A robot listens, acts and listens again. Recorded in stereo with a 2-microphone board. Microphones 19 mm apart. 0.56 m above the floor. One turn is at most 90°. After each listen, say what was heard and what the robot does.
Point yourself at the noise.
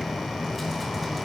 Keep listening.
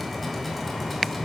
Keep listening.
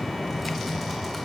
I can't make out anything.